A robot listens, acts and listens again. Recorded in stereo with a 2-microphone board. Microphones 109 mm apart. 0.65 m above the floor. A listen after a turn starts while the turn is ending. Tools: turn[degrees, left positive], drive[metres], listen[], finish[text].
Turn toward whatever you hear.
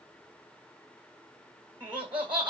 Thought: The laughter: about 40° right or 140° right.
Action: turn[-40]
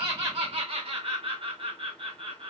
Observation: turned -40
Thought: So it is at 90° right.
Action: turn[-90]
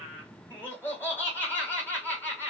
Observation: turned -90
Thought: The laughter is now 20° left.
Action: turn[20]
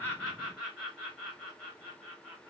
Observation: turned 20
Action: finish[Found it: laughter, straight ahead.]